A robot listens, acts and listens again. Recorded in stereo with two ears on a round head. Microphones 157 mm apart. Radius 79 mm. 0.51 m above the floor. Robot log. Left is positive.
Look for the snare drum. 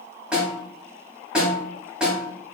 cmd yaw -30
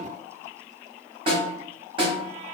note: So it is at 145° right.
cmd yaw -145
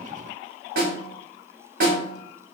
note: The snare drum is now 60° right.
cmd yaw -60
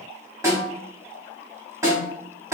note: The snare drum is now 20° right.
cmd yaw -20
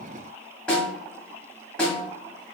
end: Facing the snare drum.